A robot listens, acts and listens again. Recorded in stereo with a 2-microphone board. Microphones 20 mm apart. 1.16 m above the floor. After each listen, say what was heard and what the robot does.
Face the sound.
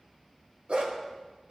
The dog barking: about 65° right or 115° right. Turn 65° right.
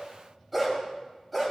Found it: a dog barking, straight ahead, 2 to 4 m away.